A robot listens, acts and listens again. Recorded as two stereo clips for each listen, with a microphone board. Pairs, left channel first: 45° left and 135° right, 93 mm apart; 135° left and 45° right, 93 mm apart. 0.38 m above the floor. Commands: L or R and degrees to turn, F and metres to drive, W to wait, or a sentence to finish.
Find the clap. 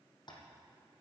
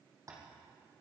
W
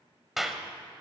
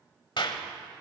L140
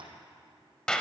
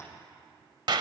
R35
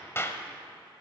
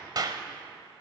R15
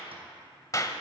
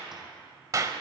Facing the clap, 1 to 2 m away.